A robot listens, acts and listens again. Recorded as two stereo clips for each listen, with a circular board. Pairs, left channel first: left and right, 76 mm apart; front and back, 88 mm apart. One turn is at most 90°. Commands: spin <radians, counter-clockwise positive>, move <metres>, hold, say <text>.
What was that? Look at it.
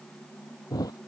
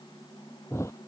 spin 0.96
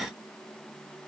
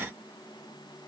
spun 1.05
say Facing where the thud came from. I can't hear it now.